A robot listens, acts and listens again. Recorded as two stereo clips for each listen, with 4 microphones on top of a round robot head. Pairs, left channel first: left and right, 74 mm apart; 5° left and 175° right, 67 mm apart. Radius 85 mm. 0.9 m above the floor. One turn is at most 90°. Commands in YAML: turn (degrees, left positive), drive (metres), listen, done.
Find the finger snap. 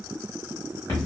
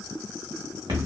listen: true
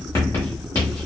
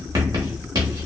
listen: true
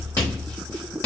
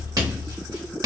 done: "I can't make out a finger snap, only writing."